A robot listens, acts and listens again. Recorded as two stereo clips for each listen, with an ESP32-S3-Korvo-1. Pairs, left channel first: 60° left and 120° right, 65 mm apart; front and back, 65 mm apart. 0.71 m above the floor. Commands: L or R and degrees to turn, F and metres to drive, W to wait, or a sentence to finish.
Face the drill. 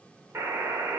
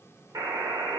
W
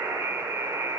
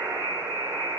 W
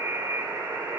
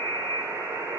I can't make out a drill to turn to.